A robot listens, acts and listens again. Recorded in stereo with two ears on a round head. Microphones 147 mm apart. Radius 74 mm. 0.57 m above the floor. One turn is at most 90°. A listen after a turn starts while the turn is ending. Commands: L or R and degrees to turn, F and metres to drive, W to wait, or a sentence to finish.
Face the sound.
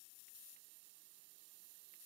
W
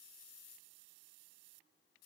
W
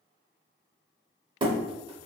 R30
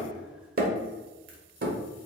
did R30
R90
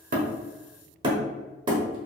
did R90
R30
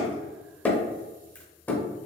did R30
L10
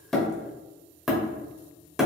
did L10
Facing the hammering.